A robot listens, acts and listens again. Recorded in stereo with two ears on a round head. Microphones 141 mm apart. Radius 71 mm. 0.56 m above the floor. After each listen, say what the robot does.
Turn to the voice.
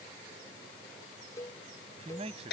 Turn 45° right.
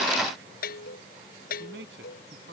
Turn 100° right.
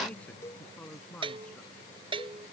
Turn 10° left.
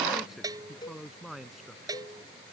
Found it: a man speaking, straight ahead.